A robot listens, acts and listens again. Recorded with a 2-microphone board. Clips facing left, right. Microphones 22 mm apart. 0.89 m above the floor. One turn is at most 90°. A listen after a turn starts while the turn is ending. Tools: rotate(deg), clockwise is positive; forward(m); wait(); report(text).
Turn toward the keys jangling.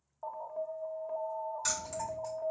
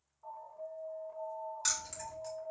rotate(30)
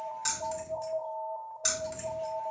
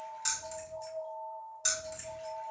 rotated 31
rotate(-15)
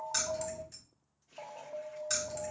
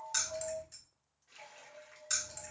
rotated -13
report("Facing the keys jangling.")